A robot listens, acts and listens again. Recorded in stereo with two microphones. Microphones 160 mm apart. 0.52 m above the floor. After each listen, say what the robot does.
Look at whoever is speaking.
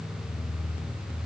Keep listening.
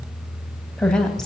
Turn 30° left.
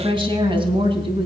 Turn 35° right.
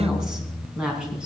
Found it: a woman speaking, straight ahead, over 4 m away.